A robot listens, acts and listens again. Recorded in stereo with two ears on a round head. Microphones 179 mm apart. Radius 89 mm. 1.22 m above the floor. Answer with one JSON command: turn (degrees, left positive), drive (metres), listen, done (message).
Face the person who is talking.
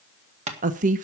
{"turn": -40}
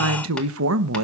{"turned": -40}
{"turn": -100}
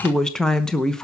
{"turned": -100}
{"done": "Found it: a woman speaking, straight ahead."}